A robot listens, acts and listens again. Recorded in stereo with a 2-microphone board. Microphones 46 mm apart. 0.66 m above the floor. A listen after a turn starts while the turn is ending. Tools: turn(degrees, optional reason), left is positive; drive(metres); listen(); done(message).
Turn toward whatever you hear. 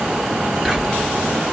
turn(degrees=30)
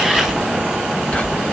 turn(degrees=150, reason="So it is at 150° left.")
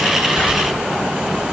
listen()
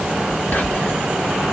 turn(degrees=35, reason="The whispering is now 35° left.")
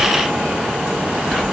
done("Facing the whispering, 1 to 2 m away.")